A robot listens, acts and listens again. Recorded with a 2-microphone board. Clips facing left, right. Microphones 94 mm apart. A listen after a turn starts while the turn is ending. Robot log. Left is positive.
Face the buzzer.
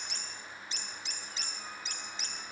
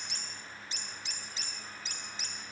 cmd idle
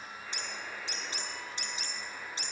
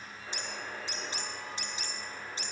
note: The buzzer: about 30° right or 150° right.
cmd yaw -30
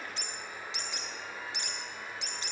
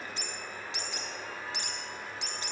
note: So it is at 120° right.
cmd yaw -120
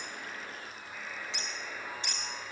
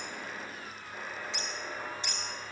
note: The buzzer is now 40° right.
cmd yaw -40
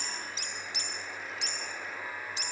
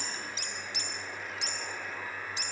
end: Facing the buzzer, over 4 m away.